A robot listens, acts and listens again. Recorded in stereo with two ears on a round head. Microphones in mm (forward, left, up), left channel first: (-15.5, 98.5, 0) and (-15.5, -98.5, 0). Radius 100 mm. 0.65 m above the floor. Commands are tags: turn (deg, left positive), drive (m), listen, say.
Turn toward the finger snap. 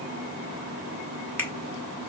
<turn deg="30"/>
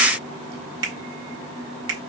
<turn deg="-20"/>
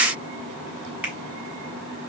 <turn deg="-10"/>
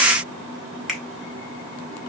<say>Facing the finger snap.</say>